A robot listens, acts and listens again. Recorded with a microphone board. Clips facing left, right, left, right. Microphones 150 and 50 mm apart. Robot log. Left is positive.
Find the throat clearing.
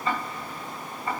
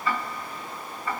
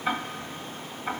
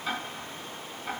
cmd idle
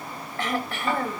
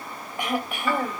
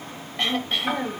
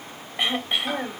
cmd yaw -30
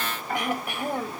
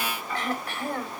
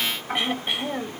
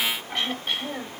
note: So it is at 15° left.
cmd yaw +15
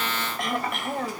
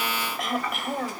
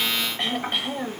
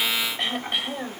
end: Found it: throat clearing, straight ahead, 2 to 4 m away.